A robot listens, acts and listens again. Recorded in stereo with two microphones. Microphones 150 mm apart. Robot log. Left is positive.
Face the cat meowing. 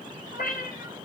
cmd yaw +90
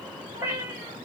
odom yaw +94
note: So it is at 15° right.
cmd yaw -15
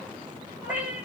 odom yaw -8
note: The cat meowing is now 10° right.
cmd yaw -10
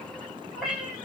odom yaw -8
end: Facing the cat meowing.